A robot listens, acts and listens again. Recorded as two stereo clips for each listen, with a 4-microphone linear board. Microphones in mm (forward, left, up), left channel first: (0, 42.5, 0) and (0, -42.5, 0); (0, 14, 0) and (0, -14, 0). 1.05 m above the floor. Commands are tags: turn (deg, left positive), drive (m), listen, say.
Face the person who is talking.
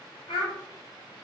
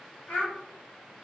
<turn deg="65"/>
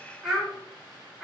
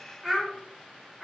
<say>Found it: a child speaking, straight ahead.</say>